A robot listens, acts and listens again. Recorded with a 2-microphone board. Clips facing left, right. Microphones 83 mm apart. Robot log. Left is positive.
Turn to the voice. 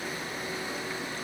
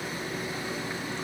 cmd idle
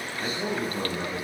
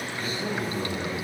note: The man speaking: about 30° left or 150° left.
cmd yaw +30
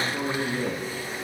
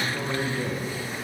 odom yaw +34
note: So it is at 115° left.
cmd yaw +115
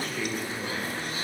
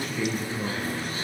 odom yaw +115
end: Facing the man speaking.